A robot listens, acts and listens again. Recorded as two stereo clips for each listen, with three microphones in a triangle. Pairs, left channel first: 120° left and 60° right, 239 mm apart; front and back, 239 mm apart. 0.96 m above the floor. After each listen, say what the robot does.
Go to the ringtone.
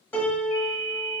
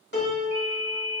Drive 1.0 m forward.
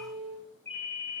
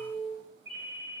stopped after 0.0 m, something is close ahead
Blocked. The ringtone is further on, straight ahead.